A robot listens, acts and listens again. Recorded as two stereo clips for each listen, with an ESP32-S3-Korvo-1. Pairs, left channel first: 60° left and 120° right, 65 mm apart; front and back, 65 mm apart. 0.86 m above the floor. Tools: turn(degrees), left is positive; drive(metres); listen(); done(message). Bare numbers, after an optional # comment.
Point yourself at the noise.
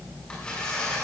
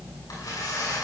# The tearing paper: 15° right.
turn(-15)
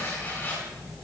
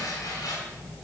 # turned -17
done("Found it: tearing paper, straight ahead.")